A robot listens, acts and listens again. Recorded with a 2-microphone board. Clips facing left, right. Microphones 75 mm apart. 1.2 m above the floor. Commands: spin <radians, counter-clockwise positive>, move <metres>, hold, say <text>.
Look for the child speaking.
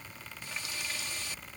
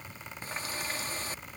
hold
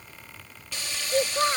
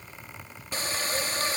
spin 1.05
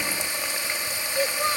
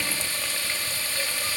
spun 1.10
spin 1.05
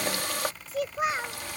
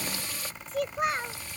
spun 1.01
say Found it: a child speaking, straight ahead.